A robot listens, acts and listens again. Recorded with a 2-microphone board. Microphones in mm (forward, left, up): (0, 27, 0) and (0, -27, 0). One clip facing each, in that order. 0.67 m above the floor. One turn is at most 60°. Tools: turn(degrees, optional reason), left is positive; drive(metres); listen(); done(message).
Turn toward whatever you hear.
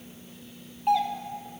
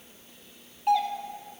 turn(degrees=30)
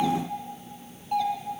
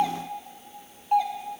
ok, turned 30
turn(degrees=-25, reason="So it is at 25° right.")
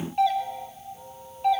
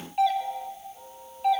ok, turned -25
done("Facing the doorbell.")